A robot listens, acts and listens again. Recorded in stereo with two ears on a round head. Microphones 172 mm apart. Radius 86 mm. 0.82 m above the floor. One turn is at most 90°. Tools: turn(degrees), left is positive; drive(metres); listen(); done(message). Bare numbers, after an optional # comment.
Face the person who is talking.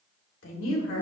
# The woman speaking: about 75° left or 105° left.
turn(75)
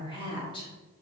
# So it is at 25° left.
turn(25)
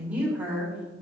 # The woman speaking is now 10° right.
turn(-10)
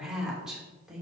done("Facing the woman speaking.")